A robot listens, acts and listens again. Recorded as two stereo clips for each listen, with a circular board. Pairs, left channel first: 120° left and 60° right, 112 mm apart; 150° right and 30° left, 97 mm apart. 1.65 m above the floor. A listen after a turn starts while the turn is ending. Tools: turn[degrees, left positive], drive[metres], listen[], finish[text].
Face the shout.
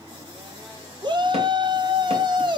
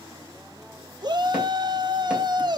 Thought: The shout: 15° right.
Action: turn[-15]
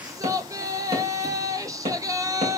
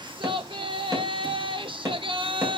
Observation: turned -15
Action: finish[Found it: a shout, straight ahead.]